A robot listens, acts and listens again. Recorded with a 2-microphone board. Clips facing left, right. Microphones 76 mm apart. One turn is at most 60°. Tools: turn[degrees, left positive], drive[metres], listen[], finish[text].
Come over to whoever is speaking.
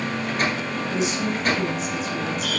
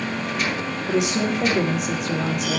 Thought: The woman speaking: about 70° right or 110° right.
Action: turn[-60]
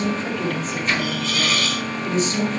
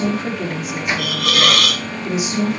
Thought: So it is at 10° right.
Action: turn[-10]
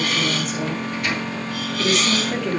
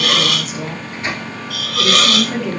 Action: drive[1.0]
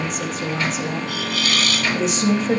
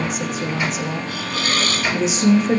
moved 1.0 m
Action: drive[1.0]
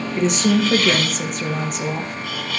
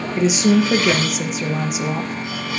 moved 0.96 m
Action: drive[1.0]
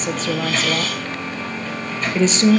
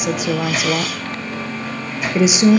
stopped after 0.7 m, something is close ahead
Thought: The woman speaking is now 10° right.
Action: turn[-10]
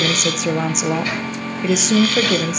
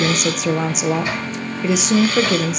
Action: finish[I am next to the woman speaking.]